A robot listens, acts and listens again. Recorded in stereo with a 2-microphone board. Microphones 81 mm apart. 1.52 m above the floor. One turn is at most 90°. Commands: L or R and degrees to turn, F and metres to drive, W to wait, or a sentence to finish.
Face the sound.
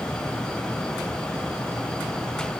W
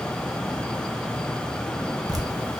R50
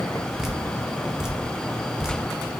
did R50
Found it: dripping, straight ahead.